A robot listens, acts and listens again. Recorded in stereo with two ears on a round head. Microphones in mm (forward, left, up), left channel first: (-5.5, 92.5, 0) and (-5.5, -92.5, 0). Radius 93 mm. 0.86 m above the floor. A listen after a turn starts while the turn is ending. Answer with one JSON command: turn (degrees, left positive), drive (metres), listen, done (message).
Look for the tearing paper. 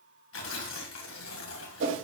{"turn": 65}
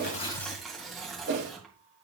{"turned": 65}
{"done": "Facing the tearing paper."}